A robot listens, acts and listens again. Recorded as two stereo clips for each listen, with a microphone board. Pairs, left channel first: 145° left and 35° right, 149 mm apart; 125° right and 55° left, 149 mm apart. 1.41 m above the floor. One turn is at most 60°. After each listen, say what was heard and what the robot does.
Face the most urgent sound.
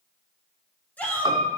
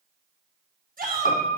The shout: 65° left. Turn 60° left.
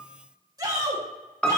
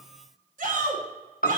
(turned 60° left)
The shout is now 30° left. Turn 30° left.
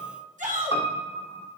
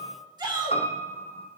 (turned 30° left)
Facing the shout.